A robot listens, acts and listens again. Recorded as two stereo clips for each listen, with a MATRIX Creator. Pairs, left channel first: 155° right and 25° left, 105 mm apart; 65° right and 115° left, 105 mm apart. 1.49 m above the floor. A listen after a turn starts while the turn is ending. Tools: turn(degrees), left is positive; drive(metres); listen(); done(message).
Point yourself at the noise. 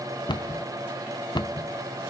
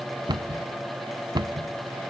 turn(degrees=160)
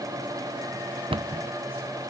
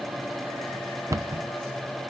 turn(degrees=55)
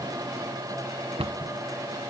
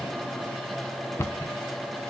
done("Found it: a cupboard door, straight ahead, under 1 m away.")